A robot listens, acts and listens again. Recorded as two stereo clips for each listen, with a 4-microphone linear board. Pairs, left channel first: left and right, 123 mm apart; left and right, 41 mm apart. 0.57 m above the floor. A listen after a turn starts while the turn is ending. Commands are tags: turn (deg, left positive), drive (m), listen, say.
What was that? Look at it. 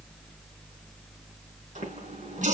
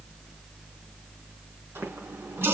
<turn deg="-90"/>
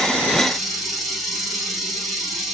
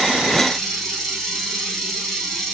<say>Found it: a running tap, straight ahead, 2 to 4 m away.</say>